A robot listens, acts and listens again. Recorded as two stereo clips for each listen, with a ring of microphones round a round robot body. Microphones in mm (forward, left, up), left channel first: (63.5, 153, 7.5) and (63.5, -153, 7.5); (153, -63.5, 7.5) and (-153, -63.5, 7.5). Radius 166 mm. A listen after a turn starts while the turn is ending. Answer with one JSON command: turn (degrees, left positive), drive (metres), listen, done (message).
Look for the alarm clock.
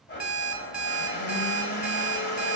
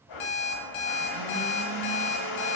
{"done": "Facing the alarm clock."}